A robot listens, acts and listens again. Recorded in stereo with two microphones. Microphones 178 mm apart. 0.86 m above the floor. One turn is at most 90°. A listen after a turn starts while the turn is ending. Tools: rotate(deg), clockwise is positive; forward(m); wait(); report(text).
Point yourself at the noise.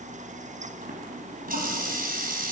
rotate(55)
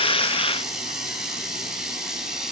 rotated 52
report("Facing the running tap, 2 to 4 m away.")